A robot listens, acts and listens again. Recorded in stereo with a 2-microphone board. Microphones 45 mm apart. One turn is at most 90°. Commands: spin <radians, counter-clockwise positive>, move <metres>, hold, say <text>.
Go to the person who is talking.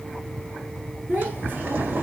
spin -0.79
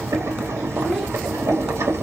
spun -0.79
hold
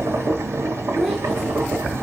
move 1.0
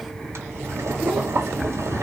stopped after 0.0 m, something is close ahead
hold
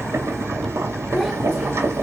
say Blocked. The child speaking is further on, straight ahead.